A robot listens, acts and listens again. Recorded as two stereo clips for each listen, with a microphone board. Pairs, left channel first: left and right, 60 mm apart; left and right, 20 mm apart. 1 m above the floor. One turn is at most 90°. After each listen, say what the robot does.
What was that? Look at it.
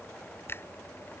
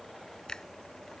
Turn 40° left.
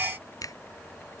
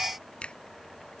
Turn 90° left.
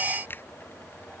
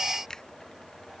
Turn 35° left.
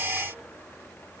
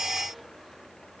Keep listening.
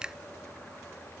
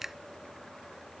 Turn 15° right.
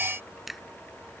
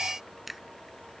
Facing the finger snap.